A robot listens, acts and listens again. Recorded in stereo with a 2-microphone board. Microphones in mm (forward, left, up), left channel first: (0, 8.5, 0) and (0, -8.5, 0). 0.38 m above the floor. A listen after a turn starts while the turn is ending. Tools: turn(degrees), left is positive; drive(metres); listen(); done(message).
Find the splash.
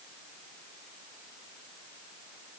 listen()
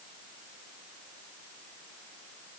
listen()
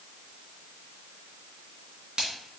turn(degrees=-65)
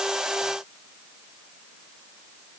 listen()
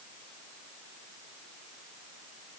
done("I heard a splash, but can't make it out now. It was about straight ahead or 50° right.")